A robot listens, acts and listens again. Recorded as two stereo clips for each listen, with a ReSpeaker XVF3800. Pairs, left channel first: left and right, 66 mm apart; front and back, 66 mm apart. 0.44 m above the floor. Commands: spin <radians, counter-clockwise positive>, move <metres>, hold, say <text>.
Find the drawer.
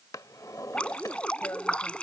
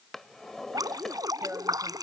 spin 1.48
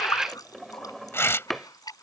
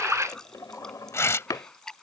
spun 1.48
say Found it: a drawer, straight ahead.